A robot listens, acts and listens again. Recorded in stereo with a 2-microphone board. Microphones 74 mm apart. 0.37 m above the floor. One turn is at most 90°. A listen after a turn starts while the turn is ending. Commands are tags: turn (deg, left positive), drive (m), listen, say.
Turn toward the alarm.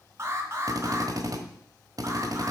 <turn deg="-40"/>
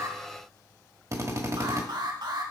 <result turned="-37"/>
<turn deg="-90"/>
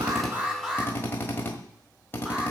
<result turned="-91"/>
<turn deg="-10"/>
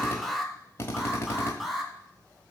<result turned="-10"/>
<say>Facing the alarm, 1 to 2 m away.</say>